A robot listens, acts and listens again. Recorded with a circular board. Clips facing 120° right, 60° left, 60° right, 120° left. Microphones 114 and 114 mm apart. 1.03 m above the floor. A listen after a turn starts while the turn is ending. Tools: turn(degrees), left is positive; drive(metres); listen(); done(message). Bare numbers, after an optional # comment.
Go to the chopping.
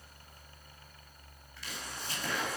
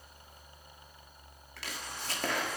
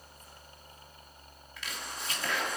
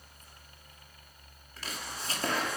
# The chopping: 70° left.
turn(70)
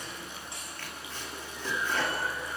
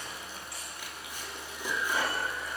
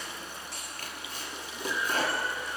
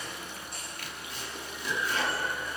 # The chopping is now 15° right.
turn(-15)
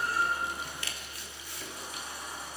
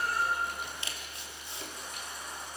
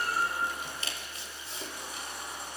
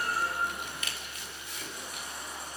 drive(1.0)
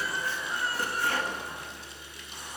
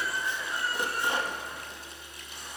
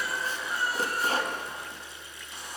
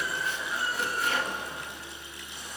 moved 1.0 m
# The chopping is now 10° right.
turn(-10)
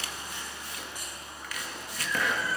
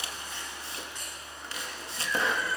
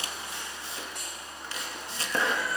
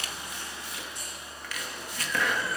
drive(1.0)
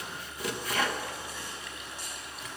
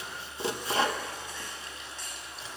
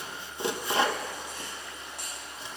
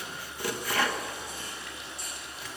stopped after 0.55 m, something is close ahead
done("Arrived at the chopping, straight ahead.")